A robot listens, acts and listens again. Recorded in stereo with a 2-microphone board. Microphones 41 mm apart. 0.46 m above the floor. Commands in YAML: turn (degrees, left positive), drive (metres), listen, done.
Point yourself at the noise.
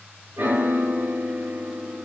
turn: -60
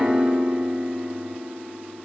turn: -10
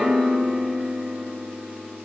done: "Found it: a piano, straight ahead."